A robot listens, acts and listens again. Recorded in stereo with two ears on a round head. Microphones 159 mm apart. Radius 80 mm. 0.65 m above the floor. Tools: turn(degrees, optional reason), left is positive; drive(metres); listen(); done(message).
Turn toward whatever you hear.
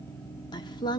turn(degrees=25, reason="The woman speaking: about 25° left or 155° left.")
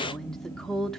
done("Found it: a woman speaking, straight ahead, 1 to 2 m away.")